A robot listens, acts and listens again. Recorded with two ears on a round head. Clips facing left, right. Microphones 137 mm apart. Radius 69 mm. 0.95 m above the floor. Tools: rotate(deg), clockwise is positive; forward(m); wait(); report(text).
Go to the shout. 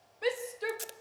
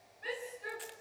rotate(-90)
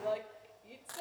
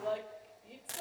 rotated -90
forward(1.0)
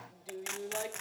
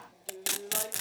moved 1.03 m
rotate(-15)
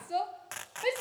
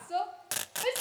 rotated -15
forward(1.0)
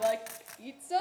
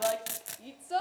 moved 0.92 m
rotate(-15)
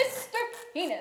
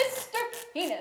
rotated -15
forward(1.0)
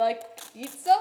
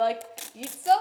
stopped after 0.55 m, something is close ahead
report("Arrived at the shout, straight ahead.")